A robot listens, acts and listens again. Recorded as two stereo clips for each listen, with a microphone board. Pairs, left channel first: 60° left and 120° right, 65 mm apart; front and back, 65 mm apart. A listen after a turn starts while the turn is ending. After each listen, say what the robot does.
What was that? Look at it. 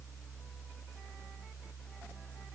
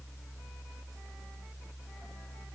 Keep listening.
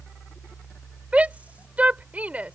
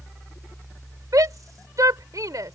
Turn 175° left.
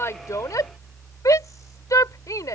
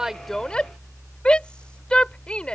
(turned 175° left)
Turn 70° left.
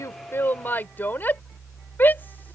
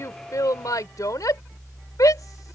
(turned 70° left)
Found it: a shout, straight ahead.